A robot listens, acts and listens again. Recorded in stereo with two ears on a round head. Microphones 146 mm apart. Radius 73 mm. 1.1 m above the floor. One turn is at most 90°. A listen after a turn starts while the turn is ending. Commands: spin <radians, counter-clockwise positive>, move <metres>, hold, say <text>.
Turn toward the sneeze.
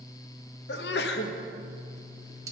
spin 1.31
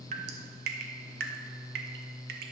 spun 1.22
hold
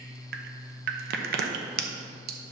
say I heard a sneeze, but can't make it out now. It was about 5° left or 35° left.